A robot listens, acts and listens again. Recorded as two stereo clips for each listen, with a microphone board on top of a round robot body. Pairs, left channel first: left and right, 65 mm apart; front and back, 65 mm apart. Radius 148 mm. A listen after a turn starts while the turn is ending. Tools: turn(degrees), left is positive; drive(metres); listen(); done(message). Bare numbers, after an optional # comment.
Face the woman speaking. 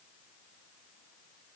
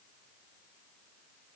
listen()
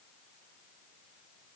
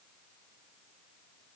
listen()
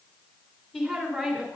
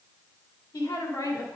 done("Facing the woman speaking.")